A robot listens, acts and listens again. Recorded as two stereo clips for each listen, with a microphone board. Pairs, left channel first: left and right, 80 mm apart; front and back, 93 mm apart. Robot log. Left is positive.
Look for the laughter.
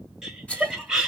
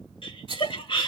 note: The laughter: 10° right.
cmd yaw -10
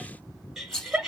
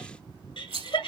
note: The laughter is now 10° right.
cmd yaw -10
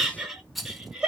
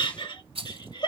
note: The laughter is now 15° right.
cmd yaw -15
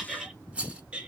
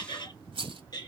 note: The laughter is now 20° right.
cmd yaw -20
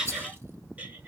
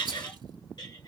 note: The laughter is now 25° right.
cmd yaw -25
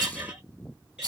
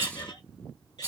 note: The laughter is now 15° right.
cmd yaw -15
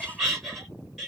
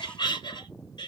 end: Found it: laughter, straight ahead.